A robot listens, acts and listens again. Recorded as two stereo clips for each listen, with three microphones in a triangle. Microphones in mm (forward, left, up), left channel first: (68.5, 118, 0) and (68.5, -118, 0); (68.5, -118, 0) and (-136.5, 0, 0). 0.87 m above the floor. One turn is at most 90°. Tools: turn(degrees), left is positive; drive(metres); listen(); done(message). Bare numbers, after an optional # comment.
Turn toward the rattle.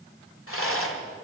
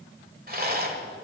# The rattle: 105° left.
turn(90)
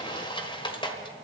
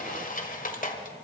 # The rattle is now 20° left.
turn(20)
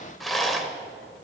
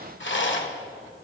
done("Facing the rattle.")